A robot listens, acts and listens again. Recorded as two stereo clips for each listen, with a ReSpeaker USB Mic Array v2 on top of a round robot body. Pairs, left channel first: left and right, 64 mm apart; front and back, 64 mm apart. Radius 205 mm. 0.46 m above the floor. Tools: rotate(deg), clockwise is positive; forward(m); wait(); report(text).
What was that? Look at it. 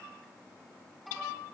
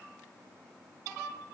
wait()
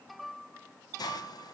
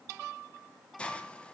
rotate(-75)
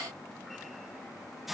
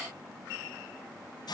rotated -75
report("Facing the hiss, 1 to 2 m away.")